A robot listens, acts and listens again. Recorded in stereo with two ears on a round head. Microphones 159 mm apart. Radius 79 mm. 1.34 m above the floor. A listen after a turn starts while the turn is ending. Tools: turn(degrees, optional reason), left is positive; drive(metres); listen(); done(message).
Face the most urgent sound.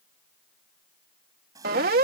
turn(degrees=-55, reason="The siren: about 55° right or 125° right.")
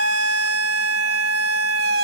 turn(degrees=-65, reason="So it is at 65° right.")
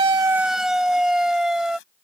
done("Found it: a siren, straight ahead.")